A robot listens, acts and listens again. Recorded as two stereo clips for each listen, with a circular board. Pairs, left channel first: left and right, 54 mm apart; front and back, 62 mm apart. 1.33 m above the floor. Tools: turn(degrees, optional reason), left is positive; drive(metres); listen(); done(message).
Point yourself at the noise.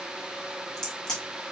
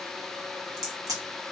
turn(degrees=170, reason="The crack: 170° left.")
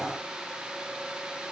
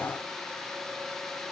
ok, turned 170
done("I heard a crack from this way, but can't make it out now.")